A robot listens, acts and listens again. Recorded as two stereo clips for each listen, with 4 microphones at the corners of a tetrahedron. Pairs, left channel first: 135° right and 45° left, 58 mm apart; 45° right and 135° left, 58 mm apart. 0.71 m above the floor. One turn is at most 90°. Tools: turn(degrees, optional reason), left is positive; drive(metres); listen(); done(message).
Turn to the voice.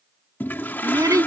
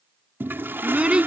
turn(degrees=65, reason="The child speaking: 65° left.")
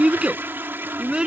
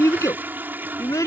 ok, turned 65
turn(degrees=-30, reason="The child speaking is now 30° right.")
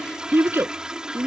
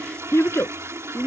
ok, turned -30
done("Facing the child speaking.")